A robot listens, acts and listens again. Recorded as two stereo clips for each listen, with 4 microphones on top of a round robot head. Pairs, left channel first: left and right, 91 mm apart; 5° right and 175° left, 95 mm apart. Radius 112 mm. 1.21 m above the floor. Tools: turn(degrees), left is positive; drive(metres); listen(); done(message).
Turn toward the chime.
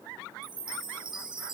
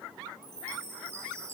turn(degrees=-120)
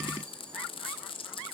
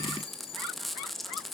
turn(degrees=10)
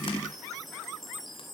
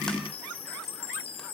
done("Found it: a chime, straight ahead, 1 to 2 m away.")